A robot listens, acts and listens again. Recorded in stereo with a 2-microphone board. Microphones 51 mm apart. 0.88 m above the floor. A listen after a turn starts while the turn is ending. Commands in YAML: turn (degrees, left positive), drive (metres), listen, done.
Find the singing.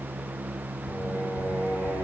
turn: 90
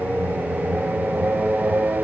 turn: -10
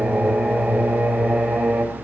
turn: -10
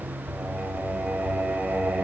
turn: -10
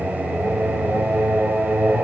done: "Found it: singing, straight ahead."